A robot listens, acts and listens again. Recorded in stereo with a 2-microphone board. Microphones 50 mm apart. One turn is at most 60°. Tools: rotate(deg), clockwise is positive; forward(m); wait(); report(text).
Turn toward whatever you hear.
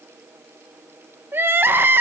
rotate(45)
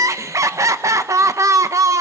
rotate(60)
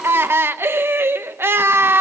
rotate(50)
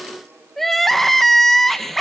report("Found it: crying, straight ahead.")